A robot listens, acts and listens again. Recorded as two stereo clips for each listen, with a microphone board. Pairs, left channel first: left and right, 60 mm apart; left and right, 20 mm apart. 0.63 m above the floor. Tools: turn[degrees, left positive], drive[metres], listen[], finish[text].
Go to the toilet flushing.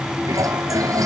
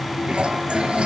Thought: The toilet flushing: about 75° right or 105° right.
Action: turn[-75]
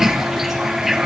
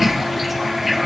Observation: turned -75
Action: drive[1.0]
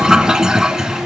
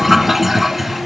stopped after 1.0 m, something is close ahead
Thought: The toilet flushing is now 10° right.
Action: turn[-10]
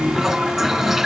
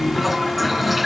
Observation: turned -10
Action: finish[I am next to the toilet flushing.]